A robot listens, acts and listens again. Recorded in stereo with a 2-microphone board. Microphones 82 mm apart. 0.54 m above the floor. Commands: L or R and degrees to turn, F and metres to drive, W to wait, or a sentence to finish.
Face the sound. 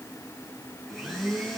R30
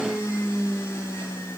L30
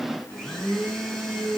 Found it: a blender, straight ahead.